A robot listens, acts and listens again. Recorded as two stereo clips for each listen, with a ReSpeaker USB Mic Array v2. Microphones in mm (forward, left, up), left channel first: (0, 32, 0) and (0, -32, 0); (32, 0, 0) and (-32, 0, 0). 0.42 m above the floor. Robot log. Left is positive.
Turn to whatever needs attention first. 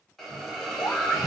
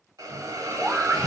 note: The scream: 105° left.
cmd yaw +105
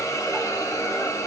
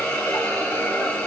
cmd idle
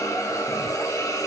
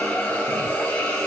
cmd idle
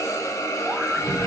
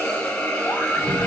end: Facing the scream, 1 to 2 m away.